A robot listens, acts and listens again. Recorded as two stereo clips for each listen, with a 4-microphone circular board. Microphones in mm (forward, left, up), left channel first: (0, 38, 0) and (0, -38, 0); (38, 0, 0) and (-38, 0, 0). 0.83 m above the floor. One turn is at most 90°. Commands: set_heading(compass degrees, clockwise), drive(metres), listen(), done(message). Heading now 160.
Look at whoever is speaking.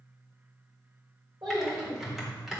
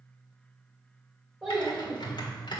set_heading(250)
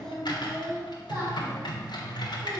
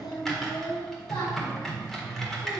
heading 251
set_heading(276)
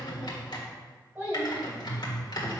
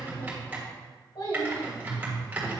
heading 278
set_heading(288)
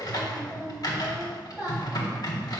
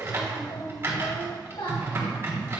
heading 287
done("Found it: a child speaking, straight ahead, 2 to 4 m away.")